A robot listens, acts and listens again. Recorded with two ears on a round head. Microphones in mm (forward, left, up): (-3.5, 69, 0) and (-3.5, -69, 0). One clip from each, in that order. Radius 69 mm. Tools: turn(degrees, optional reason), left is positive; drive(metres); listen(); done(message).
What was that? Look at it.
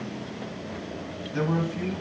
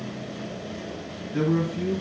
turn(degrees=90)
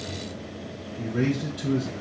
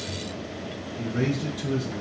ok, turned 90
turn(degrees=-10, reason="So it is at 10° right.")
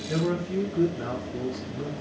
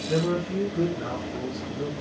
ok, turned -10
done("Found it: a man speaking, straight ahead.")